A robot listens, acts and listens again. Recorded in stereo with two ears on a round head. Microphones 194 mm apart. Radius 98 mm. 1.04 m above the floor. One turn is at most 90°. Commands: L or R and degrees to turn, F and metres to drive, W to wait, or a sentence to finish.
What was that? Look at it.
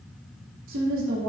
R70
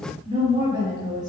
R15
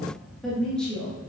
L10
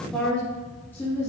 L15
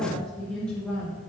Found it: a woman speaking, straight ahead.